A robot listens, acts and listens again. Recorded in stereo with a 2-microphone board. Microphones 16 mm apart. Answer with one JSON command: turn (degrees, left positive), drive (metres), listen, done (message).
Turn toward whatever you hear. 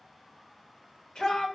{"turn": 65}
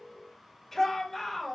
{"turn": 15}
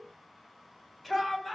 {"done": "Found it: a shout, straight ahead."}